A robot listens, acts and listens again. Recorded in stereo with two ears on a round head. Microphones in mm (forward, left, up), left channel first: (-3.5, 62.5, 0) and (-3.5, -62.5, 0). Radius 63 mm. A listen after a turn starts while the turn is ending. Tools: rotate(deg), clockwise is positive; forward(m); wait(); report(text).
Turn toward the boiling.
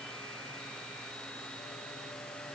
wait()
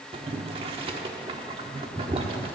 rotate(45)
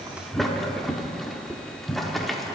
report("Facing the boiling.")